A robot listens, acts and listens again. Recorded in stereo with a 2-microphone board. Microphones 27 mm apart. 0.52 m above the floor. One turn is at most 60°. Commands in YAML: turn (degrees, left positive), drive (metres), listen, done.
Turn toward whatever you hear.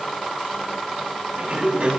turn: -55
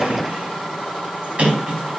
turn: -60
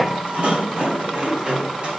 turn: -45
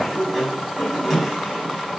turn: -10
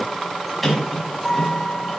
done: "Found it: a sliding door, straight ahead."